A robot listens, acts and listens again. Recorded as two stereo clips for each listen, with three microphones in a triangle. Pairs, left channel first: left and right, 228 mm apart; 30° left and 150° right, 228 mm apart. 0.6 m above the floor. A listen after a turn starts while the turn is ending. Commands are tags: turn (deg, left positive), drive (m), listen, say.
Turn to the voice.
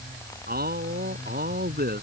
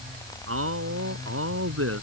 <turn deg="-135"/>
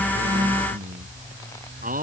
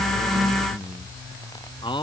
<turn deg="-40"/>
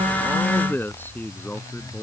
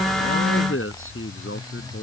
<turn deg="10"/>
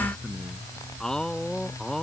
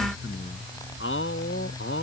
<say>Found it: a man speaking, straight ahead.</say>